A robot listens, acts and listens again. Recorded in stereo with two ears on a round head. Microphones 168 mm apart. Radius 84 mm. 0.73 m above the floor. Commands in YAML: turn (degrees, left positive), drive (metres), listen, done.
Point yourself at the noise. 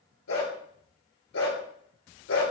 turn: 90
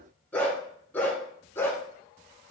turn: 15
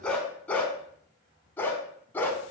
turn: 10
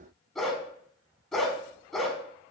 done: "Found it: a dog barking, straight ahead, 1 to 2 m away."